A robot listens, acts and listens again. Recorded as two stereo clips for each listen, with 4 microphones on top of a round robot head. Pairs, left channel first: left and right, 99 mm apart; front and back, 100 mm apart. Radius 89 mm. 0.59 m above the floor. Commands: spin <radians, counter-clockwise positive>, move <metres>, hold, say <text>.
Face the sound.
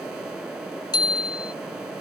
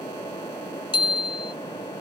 spin 0.79
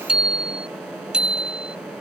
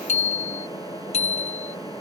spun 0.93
spin -0.17
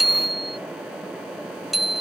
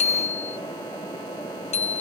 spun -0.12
say Facing the bicycle bell.